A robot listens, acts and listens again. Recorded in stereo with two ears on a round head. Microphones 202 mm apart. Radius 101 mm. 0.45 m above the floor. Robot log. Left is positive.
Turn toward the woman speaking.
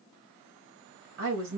note: The woman speaking: about 60° right or 120° right.
cmd yaw -60
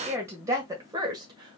note: So it is at 20° right.
cmd yaw -20
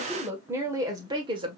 note: The woman speaking is now 25° right.
cmd yaw -25
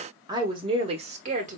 note: The woman speaking is now 35° right.
cmd yaw -35
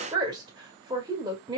note: The woman speaking is now 20° right.
cmd yaw -20
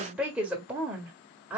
end: Facing the woman speaking.